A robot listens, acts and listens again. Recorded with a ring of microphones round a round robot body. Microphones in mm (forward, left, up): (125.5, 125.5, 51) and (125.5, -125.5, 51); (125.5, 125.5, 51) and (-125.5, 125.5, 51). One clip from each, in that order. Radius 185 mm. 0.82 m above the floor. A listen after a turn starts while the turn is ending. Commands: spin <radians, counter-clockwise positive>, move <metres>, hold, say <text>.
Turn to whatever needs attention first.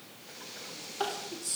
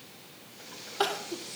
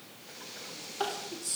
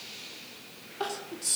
spin -1.31
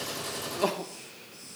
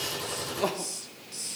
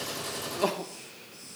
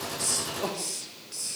spin 0.26
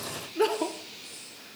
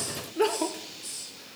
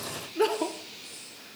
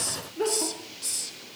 say Found it: crying, straight ahead.